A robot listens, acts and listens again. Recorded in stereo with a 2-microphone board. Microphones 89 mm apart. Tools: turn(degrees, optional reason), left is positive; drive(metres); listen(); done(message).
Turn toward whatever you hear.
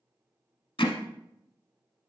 turn(degrees=60, reason="The hammering: about 60° left or 120° left.")
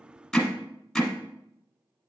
done("Found it: hammering, straight ahead.")